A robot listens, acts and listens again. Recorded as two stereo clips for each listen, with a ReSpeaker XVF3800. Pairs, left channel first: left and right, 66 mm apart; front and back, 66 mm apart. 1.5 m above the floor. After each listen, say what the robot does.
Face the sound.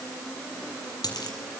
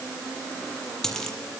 Turn 80° left.
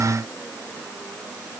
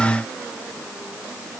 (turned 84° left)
Facing where the dropped coin came from. I can't hear it now.